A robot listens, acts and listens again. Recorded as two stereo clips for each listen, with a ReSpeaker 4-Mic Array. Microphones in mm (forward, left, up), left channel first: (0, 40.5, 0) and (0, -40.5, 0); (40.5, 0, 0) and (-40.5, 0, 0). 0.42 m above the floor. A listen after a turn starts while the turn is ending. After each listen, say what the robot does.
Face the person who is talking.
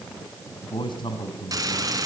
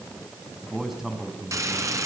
Turn 95° left.
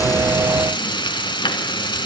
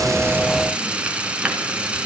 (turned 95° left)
Keep listening.
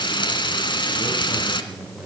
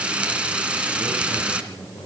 Turn 20° right.
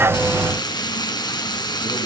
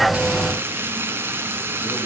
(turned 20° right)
Keep listening.
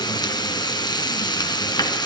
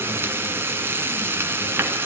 Keep listening.
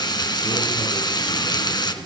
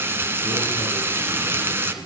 Facing where the man speaking came from. I can't hear it now.